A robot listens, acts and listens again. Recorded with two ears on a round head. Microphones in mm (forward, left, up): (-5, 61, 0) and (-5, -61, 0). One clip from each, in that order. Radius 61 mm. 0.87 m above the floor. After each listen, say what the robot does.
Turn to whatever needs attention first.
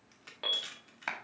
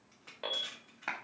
Turn 35° left.
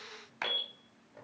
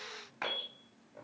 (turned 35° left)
Turn 110° left.
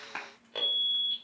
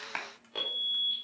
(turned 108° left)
Found it: an alarm, straight ahead.